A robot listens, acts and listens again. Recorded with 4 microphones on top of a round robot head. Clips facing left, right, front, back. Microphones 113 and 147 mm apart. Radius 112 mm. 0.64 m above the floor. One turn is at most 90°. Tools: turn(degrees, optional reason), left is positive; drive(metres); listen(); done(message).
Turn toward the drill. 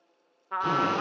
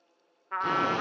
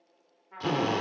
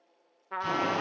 done("Facing the drill, 2 to 4 m away.")